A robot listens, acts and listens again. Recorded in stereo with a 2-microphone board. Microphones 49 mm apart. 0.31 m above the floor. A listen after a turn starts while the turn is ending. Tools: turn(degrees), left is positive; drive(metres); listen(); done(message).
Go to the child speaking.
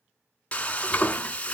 listen()
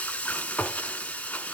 listen()
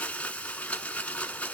done("I can't make out a child speaking, only frying.")